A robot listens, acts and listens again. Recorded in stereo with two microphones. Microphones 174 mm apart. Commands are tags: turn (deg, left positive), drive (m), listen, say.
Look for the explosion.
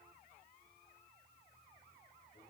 <listen/>
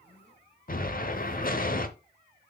<turn deg="55"/>
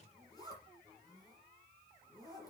<listen/>
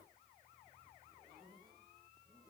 <say>I heard an explosion, but can't make it out now. It was about straight ahead or 70° left.</say>